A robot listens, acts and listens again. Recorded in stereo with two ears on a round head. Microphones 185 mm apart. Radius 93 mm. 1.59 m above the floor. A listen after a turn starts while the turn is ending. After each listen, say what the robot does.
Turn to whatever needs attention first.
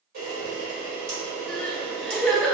Turn 30° left.
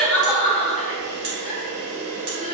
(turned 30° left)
Turn 150° left.
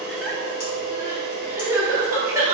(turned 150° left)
Turn 15° right.
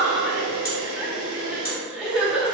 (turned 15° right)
Found it: crying, straight ahead.